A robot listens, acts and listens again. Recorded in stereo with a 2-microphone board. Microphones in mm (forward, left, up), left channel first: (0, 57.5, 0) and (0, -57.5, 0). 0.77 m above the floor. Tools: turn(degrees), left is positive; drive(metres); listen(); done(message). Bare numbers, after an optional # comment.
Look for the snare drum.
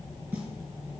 listen()
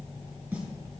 turn(-30)
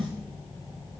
# So it is at 135° right.
turn(-135)
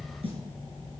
listen()
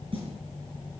# The snare drum is now 60° right.
turn(-60)
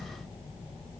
listen()
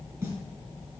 # The snare drum is now 25° right.
turn(-25)
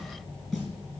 done("Facing the snare drum, over 4 m away.")